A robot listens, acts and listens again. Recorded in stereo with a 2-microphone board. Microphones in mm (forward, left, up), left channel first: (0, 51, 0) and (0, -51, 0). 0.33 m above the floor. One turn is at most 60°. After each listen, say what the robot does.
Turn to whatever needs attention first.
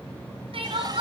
Turn 60° right.
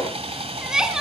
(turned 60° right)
Facing the crying, 2 to 4 m away.